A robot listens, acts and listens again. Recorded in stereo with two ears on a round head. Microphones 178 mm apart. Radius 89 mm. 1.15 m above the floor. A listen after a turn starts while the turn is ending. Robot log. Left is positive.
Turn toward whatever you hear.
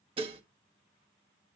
note: The dishes clattering: about 25° right or 155° right.
cmd yaw -25
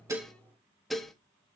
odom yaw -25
end: Found it: dishes clattering, straight ahead.